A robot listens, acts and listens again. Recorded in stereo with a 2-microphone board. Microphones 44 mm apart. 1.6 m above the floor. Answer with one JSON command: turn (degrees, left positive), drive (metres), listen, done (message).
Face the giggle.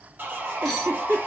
{"turn": -60}
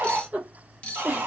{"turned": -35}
{"turn": -45}
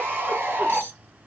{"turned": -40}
{"listen": true}
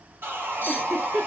{"done": "Found it: a giggle, straight ahead."}